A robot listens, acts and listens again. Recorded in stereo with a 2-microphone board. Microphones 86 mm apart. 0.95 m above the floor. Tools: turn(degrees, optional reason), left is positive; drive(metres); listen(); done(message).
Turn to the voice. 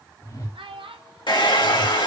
turn(degrees=-90)
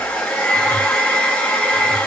listen()
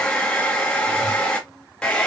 listen()
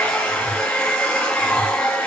done("I heard a child speaking from this way, but can't make it out now.")